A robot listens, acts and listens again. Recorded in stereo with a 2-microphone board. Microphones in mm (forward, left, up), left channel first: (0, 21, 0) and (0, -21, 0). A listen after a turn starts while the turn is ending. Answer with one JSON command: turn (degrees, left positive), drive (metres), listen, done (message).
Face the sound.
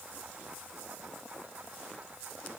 {"listen": true}
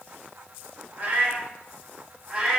{"turn": -15}
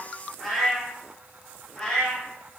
{"turn": 20}
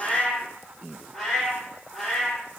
{"done": "Found it: a cat meowing, straight ahead, 1 to 2 m away."}